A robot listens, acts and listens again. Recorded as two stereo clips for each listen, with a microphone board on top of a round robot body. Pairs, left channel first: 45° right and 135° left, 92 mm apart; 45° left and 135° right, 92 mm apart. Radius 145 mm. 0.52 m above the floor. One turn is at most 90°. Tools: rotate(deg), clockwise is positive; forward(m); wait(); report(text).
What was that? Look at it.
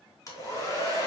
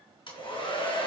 rotate(-10)
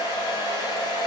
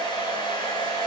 report("Found it: a hair dryer, straight ahead, 2 to 4 m away.")